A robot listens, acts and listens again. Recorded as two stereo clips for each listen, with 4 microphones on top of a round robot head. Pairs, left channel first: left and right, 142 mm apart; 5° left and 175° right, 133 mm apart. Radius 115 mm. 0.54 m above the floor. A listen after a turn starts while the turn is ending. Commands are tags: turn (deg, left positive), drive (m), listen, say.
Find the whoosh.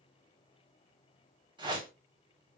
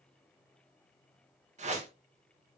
<turn deg="-145"/>
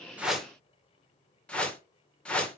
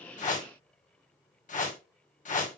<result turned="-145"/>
<turn deg="10"/>
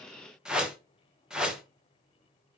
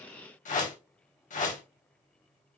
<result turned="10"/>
<say>Found it: a whoosh, straight ahead.</say>